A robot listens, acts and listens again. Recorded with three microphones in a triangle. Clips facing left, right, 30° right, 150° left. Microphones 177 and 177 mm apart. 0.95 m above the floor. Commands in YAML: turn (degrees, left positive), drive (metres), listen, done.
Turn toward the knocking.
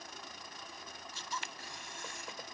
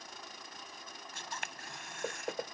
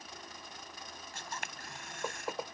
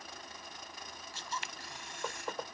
turn: -110
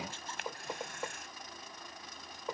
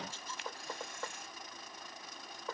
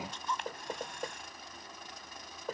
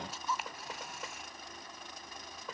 turn: 15
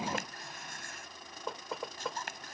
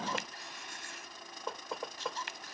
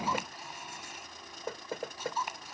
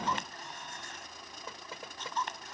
done: "Found it: knocking, straight ahead."